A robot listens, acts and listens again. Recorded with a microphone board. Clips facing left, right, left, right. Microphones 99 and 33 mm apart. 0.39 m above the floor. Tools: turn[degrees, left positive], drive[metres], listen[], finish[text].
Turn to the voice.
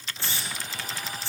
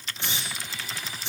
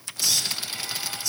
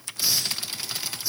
Action: listen[]
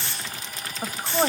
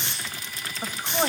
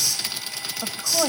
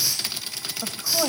Action: turn[30]
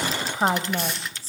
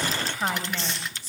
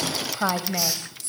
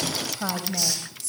Thought: So it is at 135° left.
Action: turn[135]
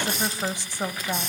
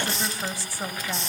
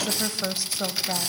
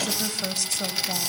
Thought: The woman speaking is now 25° left.
Action: turn[25]
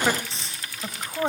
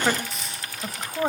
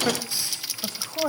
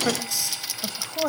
Action: finish[Facing the woman speaking.]